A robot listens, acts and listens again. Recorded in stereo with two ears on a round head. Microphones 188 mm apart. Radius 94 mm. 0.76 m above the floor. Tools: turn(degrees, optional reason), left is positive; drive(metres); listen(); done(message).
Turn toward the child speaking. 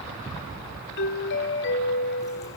listen()
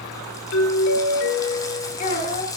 turn(degrees=35, reason="The child speaking: about 35° left or 145° left.")
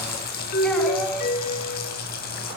listen()
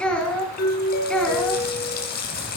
done("Facing the child speaking, over 4 m away.")